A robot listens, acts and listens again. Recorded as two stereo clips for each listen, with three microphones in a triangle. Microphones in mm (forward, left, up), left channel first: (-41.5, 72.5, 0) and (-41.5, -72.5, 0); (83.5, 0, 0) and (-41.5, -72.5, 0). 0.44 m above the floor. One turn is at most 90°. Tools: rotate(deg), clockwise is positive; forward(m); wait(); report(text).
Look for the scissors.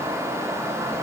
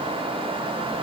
wait()
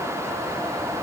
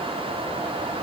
wait()
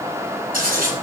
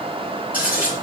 rotate(70)
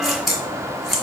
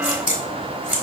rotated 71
report("Found it: scissors, straight ahead.")